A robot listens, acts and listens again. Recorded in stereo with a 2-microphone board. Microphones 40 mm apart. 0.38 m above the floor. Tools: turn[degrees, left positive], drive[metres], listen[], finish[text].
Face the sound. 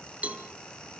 Thought: The cowbell: about 40° right or 140° right.
Action: turn[-40]
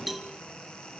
Action: finish[Facing the cowbell.]